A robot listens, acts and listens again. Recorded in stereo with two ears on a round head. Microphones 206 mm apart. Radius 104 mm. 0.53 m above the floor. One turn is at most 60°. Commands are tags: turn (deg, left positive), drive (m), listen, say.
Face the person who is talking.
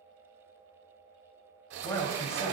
<turn deg="30"/>
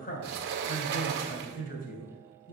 <turn deg="60"/>
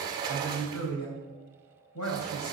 <turn deg="60"/>
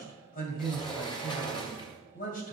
<turn deg="40"/>
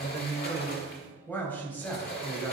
<turn deg="10"/>
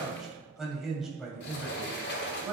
<say>Found it: a man speaking, straight ahead, 2 to 4 m away.</say>